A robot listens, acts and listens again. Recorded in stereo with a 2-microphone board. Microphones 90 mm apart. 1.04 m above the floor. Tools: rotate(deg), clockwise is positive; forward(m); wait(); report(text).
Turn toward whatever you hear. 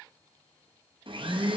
rotate(70)
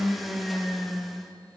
report("Facing the blender, under 1 m away.")